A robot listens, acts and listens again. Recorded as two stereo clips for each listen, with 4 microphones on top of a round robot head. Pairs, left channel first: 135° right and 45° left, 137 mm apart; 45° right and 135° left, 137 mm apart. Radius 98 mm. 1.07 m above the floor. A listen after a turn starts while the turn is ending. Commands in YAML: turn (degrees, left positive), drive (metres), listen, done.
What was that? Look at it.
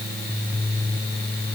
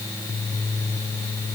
listen: true
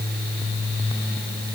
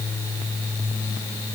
listen: true
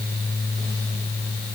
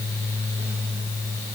done: "I can't make out anything to turn to."